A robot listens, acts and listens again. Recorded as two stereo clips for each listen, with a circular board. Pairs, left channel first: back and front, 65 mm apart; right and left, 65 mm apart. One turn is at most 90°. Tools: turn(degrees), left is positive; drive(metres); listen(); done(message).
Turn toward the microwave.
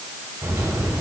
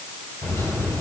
turn(degrees=-40)
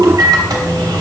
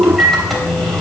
done("Facing the microwave.")